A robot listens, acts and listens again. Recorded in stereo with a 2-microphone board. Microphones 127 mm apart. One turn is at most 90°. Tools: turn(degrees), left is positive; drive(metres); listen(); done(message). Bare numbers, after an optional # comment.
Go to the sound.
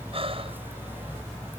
# The breathing: about 50° right or 130° right.
turn(-50)
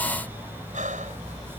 # So it is at 80° right.
turn(-80)
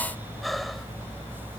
drive(1.0)
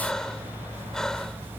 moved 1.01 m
drive(1.0)
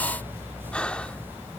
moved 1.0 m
# The breathing is now 10° left.
turn(10)
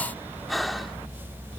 drive(1.0)
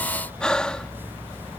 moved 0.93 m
drive(1.0)
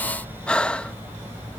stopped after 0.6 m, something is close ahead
# The breathing is now 10° left.
turn(10)
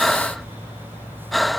done("I am next to the breathing.")